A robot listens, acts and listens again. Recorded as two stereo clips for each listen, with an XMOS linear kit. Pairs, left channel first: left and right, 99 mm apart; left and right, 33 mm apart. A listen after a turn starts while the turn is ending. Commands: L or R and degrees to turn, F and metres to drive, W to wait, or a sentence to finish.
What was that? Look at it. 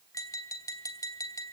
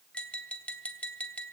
L35
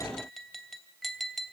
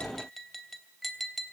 Facing the tapping.